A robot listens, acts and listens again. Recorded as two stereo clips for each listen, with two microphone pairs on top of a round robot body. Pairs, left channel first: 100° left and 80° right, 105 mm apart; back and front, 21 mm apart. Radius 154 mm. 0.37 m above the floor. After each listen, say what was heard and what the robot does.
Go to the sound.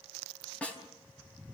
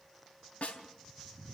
The snare drum: straight behind. Turn 180° left.
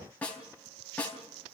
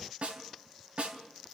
The snare drum is now 20° left. Turn 20° left.
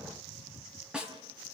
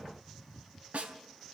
Drive 1.0 m forward.
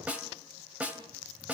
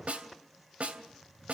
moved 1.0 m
Drive 1.0 m forward.
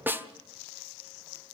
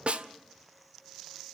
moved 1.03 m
The snare drum is now 15° right. Turn 15° right.
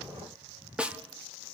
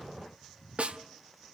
Drive 1.0 m forward.
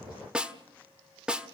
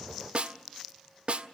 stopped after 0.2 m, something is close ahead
Arrived at the snare drum, straight ahead.